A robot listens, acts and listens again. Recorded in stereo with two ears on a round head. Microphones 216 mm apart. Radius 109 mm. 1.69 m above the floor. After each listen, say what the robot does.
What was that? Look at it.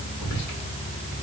Turn 75° left.
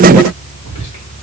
Turn 25° left.
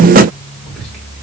Found it: whispering, straight ahead, 1 to 2 m away.